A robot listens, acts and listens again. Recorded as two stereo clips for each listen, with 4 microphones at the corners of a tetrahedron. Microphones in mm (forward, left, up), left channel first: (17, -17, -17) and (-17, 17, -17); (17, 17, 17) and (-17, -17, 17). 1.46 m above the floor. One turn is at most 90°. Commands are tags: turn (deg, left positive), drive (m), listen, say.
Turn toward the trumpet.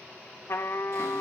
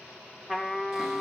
<turn deg="-40"/>
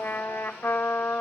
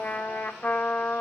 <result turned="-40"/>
<say>Facing the trumpet.</say>